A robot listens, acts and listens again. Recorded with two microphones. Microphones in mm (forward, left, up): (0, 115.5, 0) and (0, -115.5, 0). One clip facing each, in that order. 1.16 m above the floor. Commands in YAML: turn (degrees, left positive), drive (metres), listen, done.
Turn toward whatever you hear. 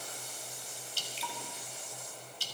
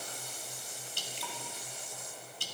turn: -50
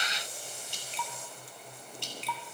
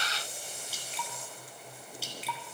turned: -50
done: "Found it: dripping, straight ahead."